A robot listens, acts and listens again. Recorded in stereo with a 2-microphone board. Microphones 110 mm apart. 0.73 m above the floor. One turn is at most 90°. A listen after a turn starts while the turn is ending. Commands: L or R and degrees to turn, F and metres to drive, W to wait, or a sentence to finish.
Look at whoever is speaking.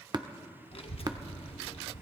L60
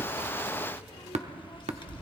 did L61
L50
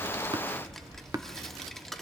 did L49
Facing the child speaking, 1 to 2 m away.